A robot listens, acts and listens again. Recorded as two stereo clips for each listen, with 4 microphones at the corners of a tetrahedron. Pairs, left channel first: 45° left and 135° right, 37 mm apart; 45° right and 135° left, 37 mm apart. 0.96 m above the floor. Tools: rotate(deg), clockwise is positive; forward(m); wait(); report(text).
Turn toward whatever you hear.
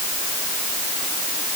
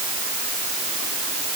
wait()
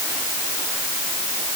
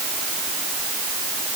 wait()
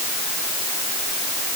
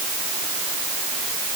report("I can't make out anything to turn to.")